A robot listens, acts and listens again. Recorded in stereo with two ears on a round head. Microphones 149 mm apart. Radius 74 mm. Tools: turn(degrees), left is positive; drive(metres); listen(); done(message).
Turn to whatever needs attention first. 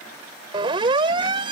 turn(degrees=-30)
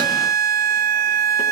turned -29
turn(degrees=-120)
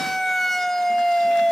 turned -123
done("Facing the siren.")